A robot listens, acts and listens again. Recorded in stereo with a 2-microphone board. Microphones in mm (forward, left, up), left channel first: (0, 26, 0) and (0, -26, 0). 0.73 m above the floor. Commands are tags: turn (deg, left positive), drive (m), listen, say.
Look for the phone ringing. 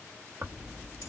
<listen/>
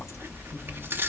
<listen/>
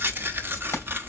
<say>I can't make out a phone ringing, only tearing paper.</say>